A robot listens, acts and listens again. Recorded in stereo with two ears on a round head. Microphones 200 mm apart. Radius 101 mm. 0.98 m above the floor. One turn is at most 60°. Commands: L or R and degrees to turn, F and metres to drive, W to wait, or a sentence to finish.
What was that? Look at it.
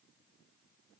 W
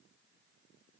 W
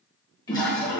L20
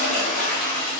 L60
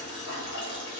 L60
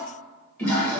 Found it: a toilet flushing, straight ahead, under 1 m away.